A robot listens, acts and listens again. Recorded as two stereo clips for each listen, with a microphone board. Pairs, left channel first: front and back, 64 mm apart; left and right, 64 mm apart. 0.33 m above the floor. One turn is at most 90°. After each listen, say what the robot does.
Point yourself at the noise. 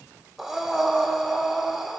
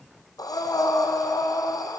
Turn 90° left.
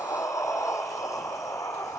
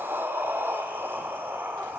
Turn 35° right.
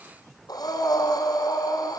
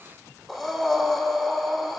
Found it: breathing, straight ahead, 2 to 4 m away.